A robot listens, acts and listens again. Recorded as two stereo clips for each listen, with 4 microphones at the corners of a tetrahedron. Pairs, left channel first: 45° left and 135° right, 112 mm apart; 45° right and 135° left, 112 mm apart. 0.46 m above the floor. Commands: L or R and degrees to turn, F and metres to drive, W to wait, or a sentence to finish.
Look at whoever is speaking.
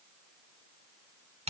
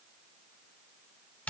W
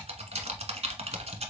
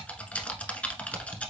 W
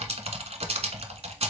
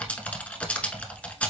I can't make out anyone speaking to turn to.